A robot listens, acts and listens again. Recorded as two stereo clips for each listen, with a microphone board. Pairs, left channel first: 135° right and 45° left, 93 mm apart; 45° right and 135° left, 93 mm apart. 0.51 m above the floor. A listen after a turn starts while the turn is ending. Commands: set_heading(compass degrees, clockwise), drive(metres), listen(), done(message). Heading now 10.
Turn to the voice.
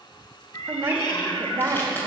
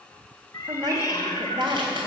set_heading(260)
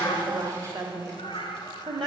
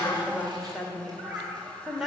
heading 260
set_heading(210)
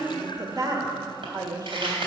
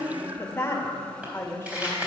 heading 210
set_heading(200)
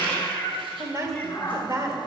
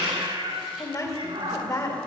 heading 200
done("Found it: a woman speaking, straight ahead, 1 to 2 m away.")